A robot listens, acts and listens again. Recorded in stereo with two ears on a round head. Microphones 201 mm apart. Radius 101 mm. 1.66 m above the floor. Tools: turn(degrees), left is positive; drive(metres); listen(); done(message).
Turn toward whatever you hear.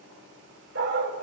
turn(degrees=-55)
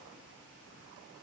listen()
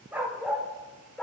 done("Found it: a dog barking, straight ahead, 2 to 4 m away.")